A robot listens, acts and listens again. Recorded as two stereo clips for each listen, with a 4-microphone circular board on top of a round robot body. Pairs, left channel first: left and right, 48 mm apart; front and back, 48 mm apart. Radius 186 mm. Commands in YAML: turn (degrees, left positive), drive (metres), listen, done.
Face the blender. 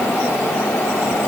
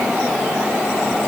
listen: true
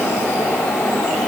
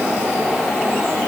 listen: true
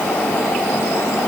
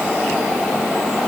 done: "I can't make out a blender to turn to."